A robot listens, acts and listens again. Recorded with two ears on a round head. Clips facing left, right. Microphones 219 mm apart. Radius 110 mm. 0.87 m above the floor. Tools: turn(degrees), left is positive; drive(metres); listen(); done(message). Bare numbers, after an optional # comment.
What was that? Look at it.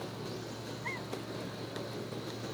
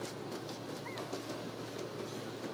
listen()
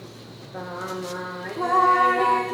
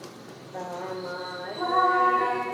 # The singing: about 50° left or 130° left.
turn(50)
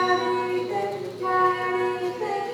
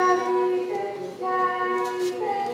# So it is at 20° left.
turn(20)
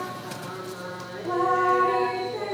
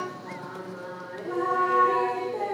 done("Found it: singing, straight ahead.")